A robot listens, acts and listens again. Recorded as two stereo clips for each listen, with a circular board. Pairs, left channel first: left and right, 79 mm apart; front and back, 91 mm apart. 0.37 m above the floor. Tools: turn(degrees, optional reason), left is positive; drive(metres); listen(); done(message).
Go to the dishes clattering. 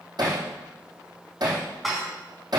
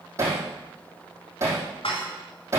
drive(metres=1.0)
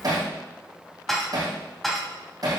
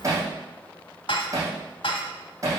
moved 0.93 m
drive(metres=1.0)
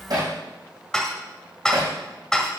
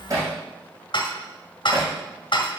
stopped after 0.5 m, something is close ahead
turn(degrees=10, reason="The dishes clattering is now 10° left.")
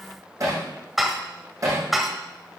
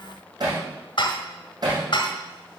done("I am next to the dishes clattering.")